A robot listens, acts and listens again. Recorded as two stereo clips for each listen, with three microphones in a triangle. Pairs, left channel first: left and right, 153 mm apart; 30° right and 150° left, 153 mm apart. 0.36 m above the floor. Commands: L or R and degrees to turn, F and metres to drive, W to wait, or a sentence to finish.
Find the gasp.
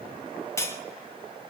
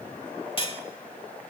W
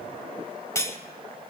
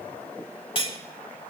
W
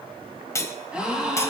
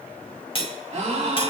R170
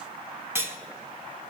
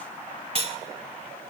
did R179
Facing where the gasp came from. I can't hear it now.